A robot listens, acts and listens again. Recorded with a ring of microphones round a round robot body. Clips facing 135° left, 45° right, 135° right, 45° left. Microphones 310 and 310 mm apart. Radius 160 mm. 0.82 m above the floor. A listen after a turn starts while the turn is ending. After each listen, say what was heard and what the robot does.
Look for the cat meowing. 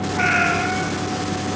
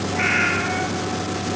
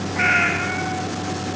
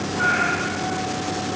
The cat meowing: 125° right. Turn 125° right.
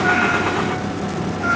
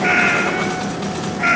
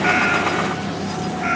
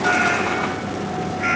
The cat meowing is now 35° right. Turn 35° right.
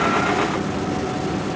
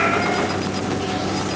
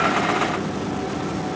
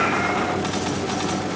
Keep listening.
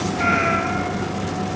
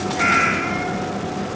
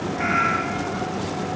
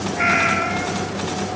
The cat meowing is now 10° left. Turn 10° left.
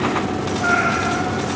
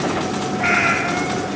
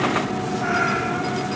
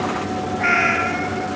Found it: a cat meowing, straight ahead, 2 to 4 m away.